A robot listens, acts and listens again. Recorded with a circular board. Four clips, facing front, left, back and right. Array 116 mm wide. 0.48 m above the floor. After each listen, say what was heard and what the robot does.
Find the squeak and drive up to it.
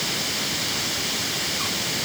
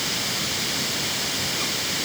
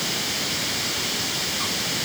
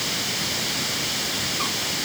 Keep listening.
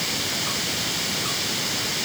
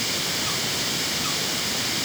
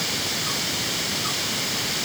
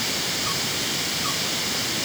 Keep listening.
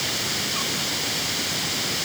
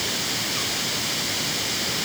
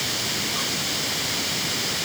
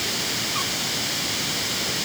I can't make out a squeak.